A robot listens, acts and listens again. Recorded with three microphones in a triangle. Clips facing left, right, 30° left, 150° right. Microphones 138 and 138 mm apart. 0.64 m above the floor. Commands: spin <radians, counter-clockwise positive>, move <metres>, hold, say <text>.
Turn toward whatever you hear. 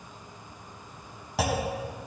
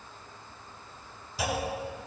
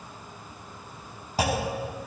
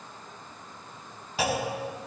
spin 1.31
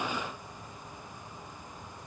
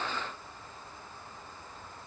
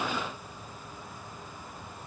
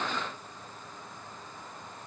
say Facing where the clunk came from. I can't hear it now.